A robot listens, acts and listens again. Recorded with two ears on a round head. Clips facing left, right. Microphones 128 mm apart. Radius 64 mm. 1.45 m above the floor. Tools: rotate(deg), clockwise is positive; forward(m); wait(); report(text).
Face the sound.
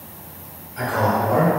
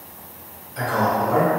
rotate(35)
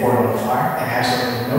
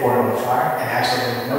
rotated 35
rotate(-30)
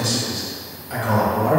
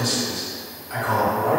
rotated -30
rotate(-45)
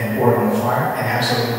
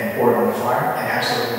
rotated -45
rotate(-15)
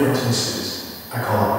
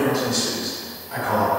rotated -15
rotate(-10)
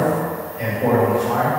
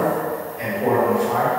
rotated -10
report("Facing the man speaking.")